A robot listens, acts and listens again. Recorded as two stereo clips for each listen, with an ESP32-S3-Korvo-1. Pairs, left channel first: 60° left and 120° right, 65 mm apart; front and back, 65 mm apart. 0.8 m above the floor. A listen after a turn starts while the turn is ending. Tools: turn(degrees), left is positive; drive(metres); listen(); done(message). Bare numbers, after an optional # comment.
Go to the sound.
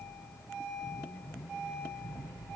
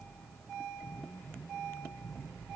listen()
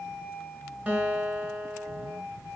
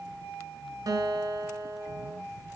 # The guitar: 170° left.
turn(170)
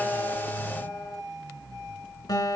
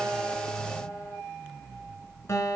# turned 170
# The guitar is now 45° left.
turn(45)
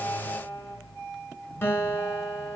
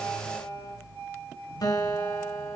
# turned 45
drive(1.0)
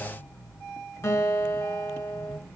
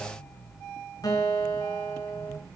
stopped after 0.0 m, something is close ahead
# The guitar is now 10° left.
turn(10)
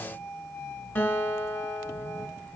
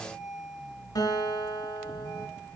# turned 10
done("Something is in my way. I am facing the guitar but have not reached it.")